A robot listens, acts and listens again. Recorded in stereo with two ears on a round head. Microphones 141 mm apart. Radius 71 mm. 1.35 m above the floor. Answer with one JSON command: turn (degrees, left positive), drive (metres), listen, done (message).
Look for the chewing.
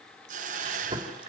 {"turn": -35}
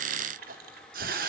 {"turn": -110}
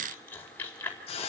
{"turn": 15}
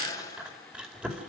{"done": "Found it: chewing, straight ahead."}